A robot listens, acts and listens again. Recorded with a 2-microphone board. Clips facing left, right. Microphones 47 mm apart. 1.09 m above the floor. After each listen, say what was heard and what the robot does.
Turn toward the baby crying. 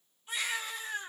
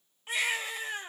Turn 90° right.
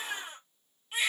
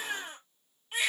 Facing the baby crying, over 4 m away.